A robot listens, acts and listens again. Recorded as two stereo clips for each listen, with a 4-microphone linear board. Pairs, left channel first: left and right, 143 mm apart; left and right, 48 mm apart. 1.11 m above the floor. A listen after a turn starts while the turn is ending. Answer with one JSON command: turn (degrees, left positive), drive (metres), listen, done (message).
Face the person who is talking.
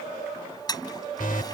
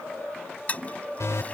{"listen": true}
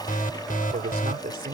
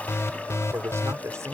{"turn": -90}
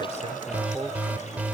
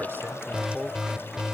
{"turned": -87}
{"done": "Facing the man speaking."}